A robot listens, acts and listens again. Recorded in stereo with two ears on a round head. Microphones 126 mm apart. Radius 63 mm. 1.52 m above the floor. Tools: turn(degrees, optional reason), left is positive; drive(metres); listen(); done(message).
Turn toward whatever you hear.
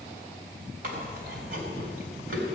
turn(degrees=-90)
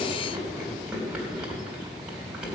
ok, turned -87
done("Found it: chewing, straight ahead.")